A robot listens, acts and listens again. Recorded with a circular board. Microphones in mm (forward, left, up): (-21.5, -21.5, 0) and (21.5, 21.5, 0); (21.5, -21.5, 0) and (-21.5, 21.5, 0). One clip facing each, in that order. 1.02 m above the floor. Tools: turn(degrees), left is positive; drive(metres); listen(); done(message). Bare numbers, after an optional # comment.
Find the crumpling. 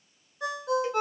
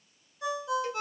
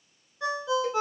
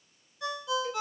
listen()
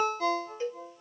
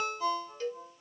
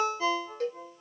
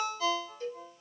listen()
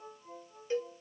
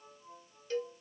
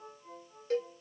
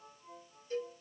done("I can't make out crumpling, only a cowbell and a ringtone.")